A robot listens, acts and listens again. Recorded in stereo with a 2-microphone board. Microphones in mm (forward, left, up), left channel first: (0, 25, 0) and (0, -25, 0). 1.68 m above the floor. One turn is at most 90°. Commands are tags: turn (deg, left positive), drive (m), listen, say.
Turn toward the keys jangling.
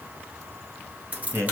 <turn deg="-30"/>
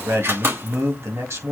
<turn deg="-90"/>
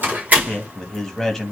<turn deg="-35"/>
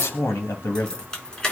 <turn deg="15"/>
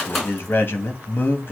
<say>Facing the keys jangling.</say>